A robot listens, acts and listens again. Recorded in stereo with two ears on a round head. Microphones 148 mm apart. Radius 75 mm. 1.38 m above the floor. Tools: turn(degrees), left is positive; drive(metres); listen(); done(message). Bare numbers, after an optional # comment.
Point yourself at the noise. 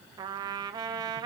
# The trumpet: about 25° right or 155° right.
turn(-25)
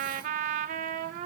# So it is at 130° right.
turn(-130)
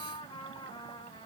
# The trumpet is now 25° left.
turn(25)
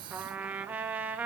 # The trumpet is now 10° right.
turn(-10)
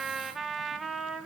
done("Found it: a trumpet, straight ahead, 1 to 2 m away.")